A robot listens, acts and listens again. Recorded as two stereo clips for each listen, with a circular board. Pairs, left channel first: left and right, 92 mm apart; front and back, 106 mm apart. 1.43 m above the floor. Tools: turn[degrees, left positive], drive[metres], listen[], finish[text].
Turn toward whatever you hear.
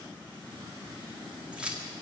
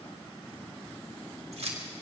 Thought: The keys jangling: 165° right.
Action: turn[-165]
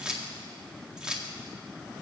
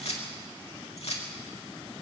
Thought: The keys jangling is now 10° right.
Action: turn[-10]
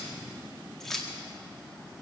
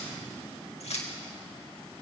Action: finish[Facing the keys jangling, 2 to 4 m away.]